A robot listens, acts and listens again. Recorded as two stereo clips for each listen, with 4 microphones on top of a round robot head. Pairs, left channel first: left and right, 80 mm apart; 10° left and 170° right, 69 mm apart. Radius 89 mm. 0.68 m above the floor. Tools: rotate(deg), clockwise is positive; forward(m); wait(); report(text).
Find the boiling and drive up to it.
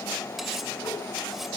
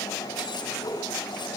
wait()
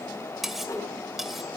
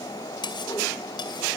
wait()
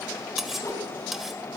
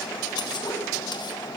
report("I can't make out boiling to turn to.")